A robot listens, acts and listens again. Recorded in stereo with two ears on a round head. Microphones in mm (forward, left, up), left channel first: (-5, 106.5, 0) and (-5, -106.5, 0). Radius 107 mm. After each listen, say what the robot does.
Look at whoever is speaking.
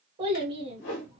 Turn 20° right.
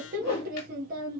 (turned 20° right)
Turn 135° right.
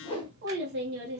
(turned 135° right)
Turn 55° right.
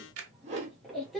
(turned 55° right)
Found it: a child speaking, straight ahead.